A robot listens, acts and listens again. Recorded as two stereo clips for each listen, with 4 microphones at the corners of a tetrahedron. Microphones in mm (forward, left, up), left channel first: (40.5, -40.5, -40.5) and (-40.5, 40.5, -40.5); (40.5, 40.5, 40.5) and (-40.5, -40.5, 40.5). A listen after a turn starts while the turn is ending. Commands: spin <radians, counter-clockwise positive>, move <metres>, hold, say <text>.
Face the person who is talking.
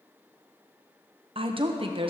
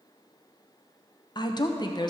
spin 1.66
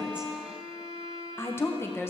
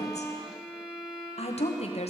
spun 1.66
spin 0.44
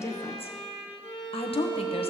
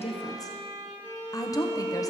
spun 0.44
spin -0.26
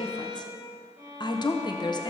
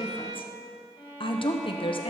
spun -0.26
say Facing the woman speaking, under 1 m away.